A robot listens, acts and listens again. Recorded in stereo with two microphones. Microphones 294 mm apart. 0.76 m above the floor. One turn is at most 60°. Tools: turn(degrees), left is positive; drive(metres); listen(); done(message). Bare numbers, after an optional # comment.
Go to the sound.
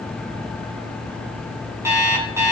turn(-30)
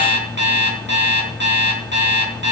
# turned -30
# So it is at 140° right.
turn(-60)
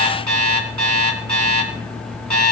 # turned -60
# The alarm clock is now 105° right.
turn(-60)
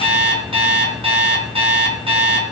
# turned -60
# The alarm clock is now 20° right.
turn(-20)
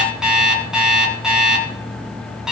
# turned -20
drive(1.0)
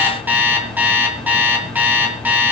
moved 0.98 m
drive(1.0)
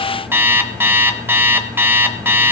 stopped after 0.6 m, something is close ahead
done("I am next to the alarm clock.")